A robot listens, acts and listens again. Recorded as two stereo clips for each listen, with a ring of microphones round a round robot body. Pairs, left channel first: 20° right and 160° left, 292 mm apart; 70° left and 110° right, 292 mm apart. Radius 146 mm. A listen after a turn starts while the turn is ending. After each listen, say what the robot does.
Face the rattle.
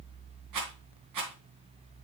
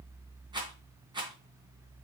Turn 175° left.
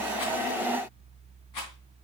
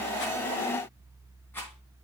Keep listening.
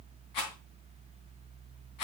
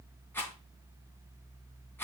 Turn 15° right.
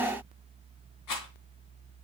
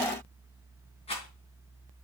Facing the rattle.